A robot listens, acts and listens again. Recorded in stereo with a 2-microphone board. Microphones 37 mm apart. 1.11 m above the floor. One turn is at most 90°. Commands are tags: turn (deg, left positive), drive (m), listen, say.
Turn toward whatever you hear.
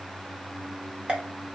<turn deg="-30"/>
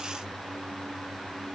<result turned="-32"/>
<listen/>
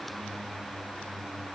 <say>I heard a pop, but can't make it out now. It was about 5° left or 120° right.</say>